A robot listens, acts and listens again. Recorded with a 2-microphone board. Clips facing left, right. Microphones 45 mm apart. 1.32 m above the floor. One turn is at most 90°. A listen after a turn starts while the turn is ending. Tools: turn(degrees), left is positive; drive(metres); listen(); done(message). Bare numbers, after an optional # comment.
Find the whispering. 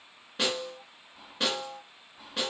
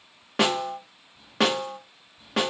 turn(90)
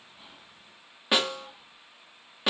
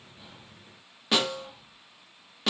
listen()
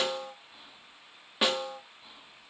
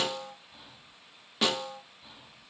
done("Facing the whispering, 2 to 4 m away.")